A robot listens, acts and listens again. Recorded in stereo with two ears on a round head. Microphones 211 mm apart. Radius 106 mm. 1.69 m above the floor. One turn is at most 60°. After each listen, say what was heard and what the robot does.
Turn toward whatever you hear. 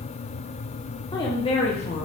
The woman speaking: about 30° left or 150° left. Turn 30° left.
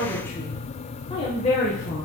The woman speaking: about 30° left or 150° left. Turn 30° left.
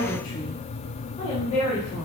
The woman speaking: about 30° left or 150° left. Turn 30° left.
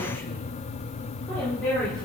Facing the woman speaking, 2 to 4 m away.